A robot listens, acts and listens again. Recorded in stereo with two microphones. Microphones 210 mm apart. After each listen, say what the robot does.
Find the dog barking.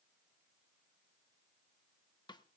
Keep listening.
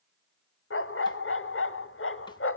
Turn 90° left.
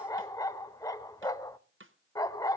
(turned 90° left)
Turn 15° left.
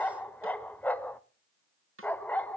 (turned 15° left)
Facing the dog barking, under 1 m away.